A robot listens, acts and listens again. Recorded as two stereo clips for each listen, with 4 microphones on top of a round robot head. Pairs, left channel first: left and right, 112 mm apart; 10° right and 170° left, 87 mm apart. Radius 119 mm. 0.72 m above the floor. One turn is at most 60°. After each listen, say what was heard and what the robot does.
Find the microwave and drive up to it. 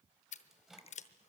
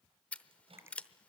The microwave: 175° right. Turn 60° right.
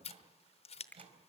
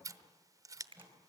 The microwave is now 125° right. Turn 60° right.
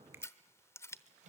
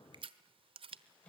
The microwave is now 85° right. Turn 60° right.
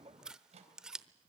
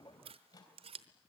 The microwave is now 60° right. Turn 60° right.
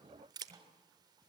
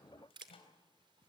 The microwave is now 30° right. Turn 30° right.
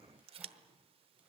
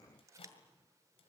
Keep listening.
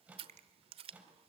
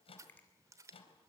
The microwave is now 10° right. Turn 10° right.
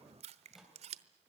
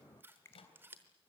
Drive 1.0 m forward.
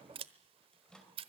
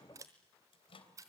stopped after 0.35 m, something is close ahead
Blocked. The microwave is further on, straight ahead.